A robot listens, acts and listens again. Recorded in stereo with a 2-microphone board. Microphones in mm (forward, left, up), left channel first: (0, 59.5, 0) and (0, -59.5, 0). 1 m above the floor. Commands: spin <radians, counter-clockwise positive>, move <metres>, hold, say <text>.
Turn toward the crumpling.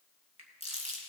spin 0.96
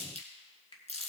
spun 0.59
spin 1.48
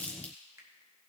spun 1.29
spin 0.17
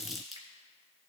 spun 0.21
say Facing the crumpling.